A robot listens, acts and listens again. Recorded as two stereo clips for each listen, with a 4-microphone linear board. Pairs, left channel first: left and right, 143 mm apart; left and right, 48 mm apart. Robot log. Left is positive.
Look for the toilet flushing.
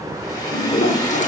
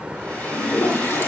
note: The toilet flushing: about 50° left or 130° left.
cmd yaw +50
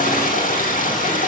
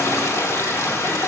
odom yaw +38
note: So it is at 85° left.
cmd yaw +85
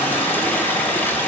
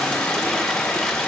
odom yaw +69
note: Nothing new. It was at 15° left.
cmd yaw +15
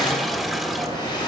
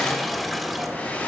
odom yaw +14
cmd idle
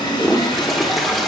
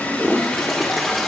end: Facing the toilet flushing, 1 to 2 m away.